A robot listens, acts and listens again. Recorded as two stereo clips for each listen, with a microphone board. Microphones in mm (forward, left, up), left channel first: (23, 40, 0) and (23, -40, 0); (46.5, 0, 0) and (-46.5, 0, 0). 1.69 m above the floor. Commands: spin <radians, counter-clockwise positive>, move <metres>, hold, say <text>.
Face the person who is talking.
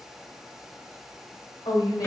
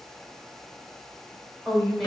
spin 1.48
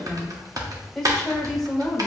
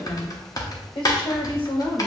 say Facing the woman speaking.